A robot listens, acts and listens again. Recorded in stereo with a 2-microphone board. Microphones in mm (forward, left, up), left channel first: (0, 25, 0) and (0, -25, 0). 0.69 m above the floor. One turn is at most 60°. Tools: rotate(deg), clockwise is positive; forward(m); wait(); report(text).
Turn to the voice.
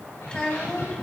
rotate(-20)
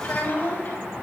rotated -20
rotate(-60)
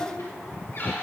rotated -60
rotate(-60)
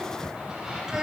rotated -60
rotate(10)
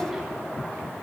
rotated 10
wait()
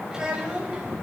rotate(15)
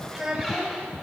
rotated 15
report("Facing the child speaking.")